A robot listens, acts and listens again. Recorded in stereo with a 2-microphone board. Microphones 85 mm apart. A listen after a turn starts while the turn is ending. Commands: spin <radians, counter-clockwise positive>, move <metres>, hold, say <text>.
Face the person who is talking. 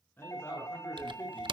spin 0.44
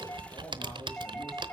hold
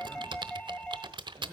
hold
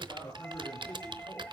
spin 2.44
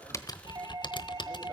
hold
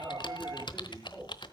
hold
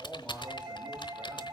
say Facing the man speaking.